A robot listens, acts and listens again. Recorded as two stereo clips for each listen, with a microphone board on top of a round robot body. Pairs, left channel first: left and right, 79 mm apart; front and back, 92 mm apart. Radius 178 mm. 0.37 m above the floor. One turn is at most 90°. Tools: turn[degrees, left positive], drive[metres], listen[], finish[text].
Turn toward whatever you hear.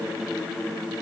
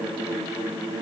Action: listen[]
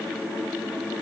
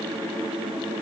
Action: listen[]
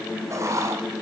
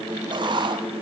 Thought: The writing: 145° right.
Action: turn[-90]
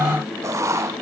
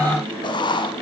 Thought: The writing is now 40° right.
Action: turn[-40]
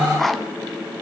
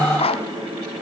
Action: finish[Found it: writing, straight ahead.]